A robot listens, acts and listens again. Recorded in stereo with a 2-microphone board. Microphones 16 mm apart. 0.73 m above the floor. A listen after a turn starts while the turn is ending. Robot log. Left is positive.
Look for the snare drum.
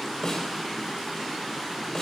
note: The snare drum: about 35° left or 145° left.
cmd yaw +35
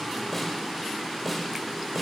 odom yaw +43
end: Facing the snare drum.